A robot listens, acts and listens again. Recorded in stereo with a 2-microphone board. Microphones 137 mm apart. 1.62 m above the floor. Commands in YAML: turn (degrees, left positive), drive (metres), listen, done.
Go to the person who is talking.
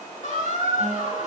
listen: true
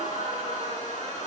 listen: true
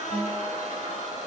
done: "I can't make out anyone speaking, only a guitar and a squeak."